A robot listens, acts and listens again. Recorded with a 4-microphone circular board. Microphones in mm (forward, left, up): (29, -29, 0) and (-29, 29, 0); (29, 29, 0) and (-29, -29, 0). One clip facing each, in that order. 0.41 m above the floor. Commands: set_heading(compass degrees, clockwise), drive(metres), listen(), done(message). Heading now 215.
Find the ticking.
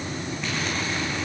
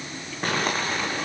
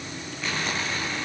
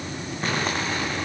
listen()
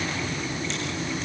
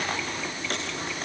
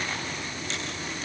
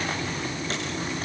listen()
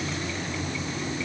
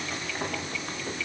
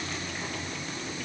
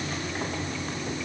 done("I can't make out ticking, only crumpling.")